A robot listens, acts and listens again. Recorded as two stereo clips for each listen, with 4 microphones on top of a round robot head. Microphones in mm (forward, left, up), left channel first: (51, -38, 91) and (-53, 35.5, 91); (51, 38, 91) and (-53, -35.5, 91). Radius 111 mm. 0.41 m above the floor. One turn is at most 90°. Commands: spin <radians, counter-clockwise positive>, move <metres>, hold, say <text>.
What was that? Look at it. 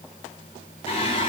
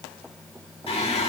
say Found it: singing, straight ahead, 2 to 4 m away.